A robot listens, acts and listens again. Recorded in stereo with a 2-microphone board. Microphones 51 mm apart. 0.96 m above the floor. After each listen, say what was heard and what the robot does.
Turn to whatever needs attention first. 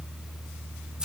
Keep listening.
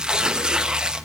Keep listening.
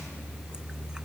I can't make out anything urgent, only tearing paper.